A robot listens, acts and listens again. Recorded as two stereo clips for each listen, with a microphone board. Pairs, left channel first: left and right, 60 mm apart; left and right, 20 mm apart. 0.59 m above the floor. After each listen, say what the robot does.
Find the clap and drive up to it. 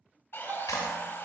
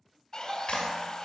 Turn 70° left.
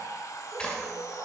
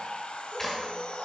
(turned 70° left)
Turn 15° left.
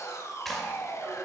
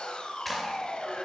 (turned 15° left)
Drive 1.0 m forward.
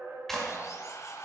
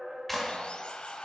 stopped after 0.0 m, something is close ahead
Something is in my way. I am facing the clap but have not reached it.